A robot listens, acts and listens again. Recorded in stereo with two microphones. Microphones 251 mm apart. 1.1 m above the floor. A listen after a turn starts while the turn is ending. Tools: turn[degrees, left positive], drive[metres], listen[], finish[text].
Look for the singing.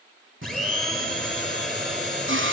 Thought: The singing: about 55° right or 125° right.
Action: turn[-55]
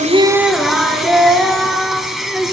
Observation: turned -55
Action: finish[Facing the singing, 2 to 4 m away.]